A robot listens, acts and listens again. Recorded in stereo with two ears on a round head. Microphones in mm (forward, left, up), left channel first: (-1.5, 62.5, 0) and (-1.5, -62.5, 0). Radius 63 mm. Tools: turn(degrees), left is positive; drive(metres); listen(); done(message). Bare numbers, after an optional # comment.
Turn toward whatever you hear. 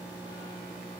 listen()
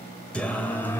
# The singing: about 15° left or 165° left.
turn(15)
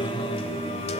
# So it is at 130° left.
turn(130)
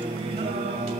# The singing is now 50° right.
turn(-50)
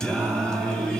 done("Found it: singing, straight ahead, 2 to 4 m away.")